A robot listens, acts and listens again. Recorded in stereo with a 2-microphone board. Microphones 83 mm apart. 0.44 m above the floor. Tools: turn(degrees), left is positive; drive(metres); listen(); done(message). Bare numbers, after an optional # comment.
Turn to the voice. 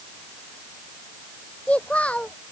# The child speaking: about 15° left or 165° left.
turn(15)
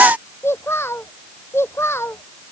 # So it is at 150° left.
turn(150)
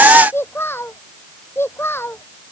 # The child speaking is now 30° left.
turn(30)
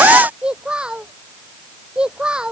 # The child speaking is now 10° right.
turn(-10)
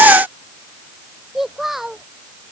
done("Found it: a child speaking, straight ahead.")